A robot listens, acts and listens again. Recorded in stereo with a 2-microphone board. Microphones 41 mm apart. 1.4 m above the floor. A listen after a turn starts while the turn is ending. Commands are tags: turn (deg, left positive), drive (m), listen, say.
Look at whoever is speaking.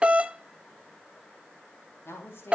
<turn deg="90"/>
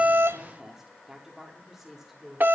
<say>Found it: a woman speaking, straight ahead, over 4 m away.</say>